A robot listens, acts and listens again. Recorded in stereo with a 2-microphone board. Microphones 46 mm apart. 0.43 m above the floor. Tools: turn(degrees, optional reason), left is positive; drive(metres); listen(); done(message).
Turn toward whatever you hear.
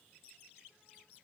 listen()
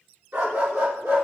turn(degrees=-90)
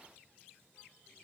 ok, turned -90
listen()
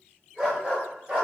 turn(degrees=-20, reason="The dog barking is now 20° right.")
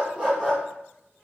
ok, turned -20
done("Found it: a dog barking, straight ahead, 2 to 4 m away.")